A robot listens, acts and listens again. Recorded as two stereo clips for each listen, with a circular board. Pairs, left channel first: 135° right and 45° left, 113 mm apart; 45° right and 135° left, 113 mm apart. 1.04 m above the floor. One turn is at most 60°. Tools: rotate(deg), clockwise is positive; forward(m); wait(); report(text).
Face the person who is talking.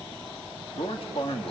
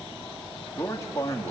rotate(60)
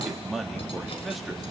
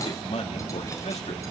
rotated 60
rotate(45)
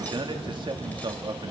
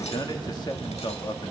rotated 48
report("Facing the man speaking.")